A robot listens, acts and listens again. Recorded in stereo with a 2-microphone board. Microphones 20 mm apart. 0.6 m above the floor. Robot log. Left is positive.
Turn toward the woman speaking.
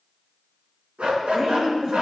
note: The woman speaking: about 35° right or 145° right.
cmd yaw -35
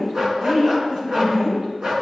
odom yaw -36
note: So it is at 105° right.
cmd yaw -105
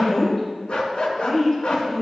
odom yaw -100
end: Found it: a woman speaking, straight ahead, over 4 m away.